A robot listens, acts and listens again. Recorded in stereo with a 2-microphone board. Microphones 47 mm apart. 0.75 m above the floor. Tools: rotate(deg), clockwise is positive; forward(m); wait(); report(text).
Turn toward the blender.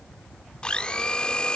rotate(-20)
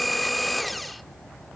report("Found it: a blender, straight ahead.")